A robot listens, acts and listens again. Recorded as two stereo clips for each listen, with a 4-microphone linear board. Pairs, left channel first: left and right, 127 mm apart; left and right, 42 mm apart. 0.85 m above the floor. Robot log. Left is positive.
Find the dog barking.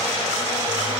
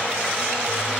cmd idle
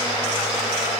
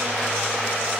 cmd idle
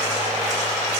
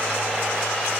end: I can't make out a dog barking.